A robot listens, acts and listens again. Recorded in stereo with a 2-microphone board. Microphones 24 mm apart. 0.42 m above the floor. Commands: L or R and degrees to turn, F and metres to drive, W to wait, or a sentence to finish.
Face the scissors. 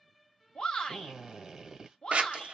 R70
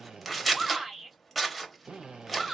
Facing the scissors.